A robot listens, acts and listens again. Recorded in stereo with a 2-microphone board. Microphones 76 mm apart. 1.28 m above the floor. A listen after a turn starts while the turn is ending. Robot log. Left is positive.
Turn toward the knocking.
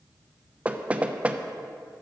note: The knocking: about 20° right or 160° right.
cmd yaw -20
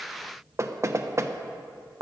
note: So it is at 140° right.
cmd yaw -140
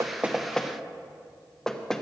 note: The knocking is now 10° left.
cmd yaw +10
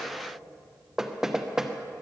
end: Facing the knocking.